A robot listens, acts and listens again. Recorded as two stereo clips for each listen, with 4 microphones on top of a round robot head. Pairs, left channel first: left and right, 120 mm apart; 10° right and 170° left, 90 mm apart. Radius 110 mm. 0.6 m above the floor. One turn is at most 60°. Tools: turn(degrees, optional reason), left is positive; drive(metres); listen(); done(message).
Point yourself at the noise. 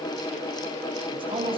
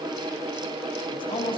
turn(degrees=-40, reason="The man speaking: 40° right.")
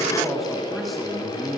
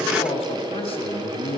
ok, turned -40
done("Found it: a man speaking, straight ahead.")